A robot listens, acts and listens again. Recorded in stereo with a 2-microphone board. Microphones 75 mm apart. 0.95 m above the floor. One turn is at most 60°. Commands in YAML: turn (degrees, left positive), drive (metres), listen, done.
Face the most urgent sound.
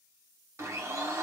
listen: true
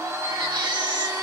turn: -60
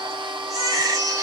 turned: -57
turn: -50
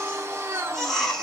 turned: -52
done: "Found it: a baby crying, straight ahead, 1 to 2 m away."